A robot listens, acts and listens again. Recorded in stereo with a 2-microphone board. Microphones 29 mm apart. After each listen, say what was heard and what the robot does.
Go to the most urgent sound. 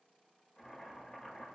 Keep listening.
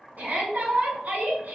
The shout: about 70° right or 110° right. Turn 70° right.
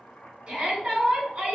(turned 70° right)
So it is at 30° right. Turn 30° right.
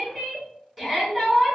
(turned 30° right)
Drive 1.0 m forward.
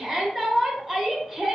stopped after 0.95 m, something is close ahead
I am next to the shout.